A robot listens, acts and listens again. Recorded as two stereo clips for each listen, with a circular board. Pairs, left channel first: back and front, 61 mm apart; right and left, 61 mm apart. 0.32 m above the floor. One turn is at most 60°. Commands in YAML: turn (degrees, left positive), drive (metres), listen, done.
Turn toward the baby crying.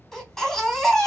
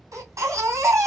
turn: 60
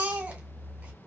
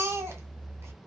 turn: 60
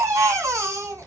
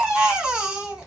turn: 20
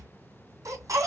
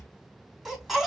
done: "Facing the baby crying."